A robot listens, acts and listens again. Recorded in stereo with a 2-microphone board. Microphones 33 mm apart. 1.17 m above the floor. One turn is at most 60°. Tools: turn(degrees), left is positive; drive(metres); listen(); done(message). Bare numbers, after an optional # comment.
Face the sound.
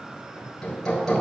# The hammering: about 15° left or 165° left.
turn(15)
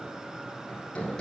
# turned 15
# So it is at 150° left.
turn(60)
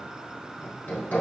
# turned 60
# The hammering is now 90° left.
turn(60)
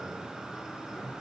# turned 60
# Nothing new. It was at 30° left.
turn(30)
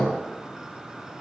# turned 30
# The hammering is now 30° left.
turn(30)
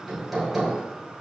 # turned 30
done("Found it: hammering, straight ahead.")